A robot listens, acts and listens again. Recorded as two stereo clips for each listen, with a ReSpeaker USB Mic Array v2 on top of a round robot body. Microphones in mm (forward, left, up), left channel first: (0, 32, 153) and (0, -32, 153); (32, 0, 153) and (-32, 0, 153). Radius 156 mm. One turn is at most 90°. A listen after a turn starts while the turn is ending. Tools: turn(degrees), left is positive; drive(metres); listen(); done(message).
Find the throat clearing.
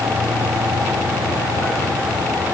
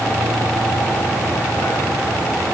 listen()
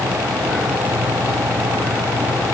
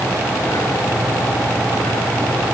listen()
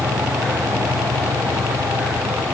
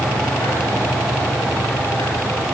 done("I can't make out throat clearing to turn to.")